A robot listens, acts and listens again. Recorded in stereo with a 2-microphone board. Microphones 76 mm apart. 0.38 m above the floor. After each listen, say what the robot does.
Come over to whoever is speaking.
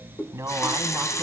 Turn 40° right.
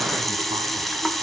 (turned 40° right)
Keep listening.
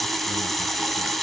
Keep listening.
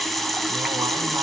I heard a man speaking, but can't make it out now. It was about straight ahead or 100° right. I did not reach it.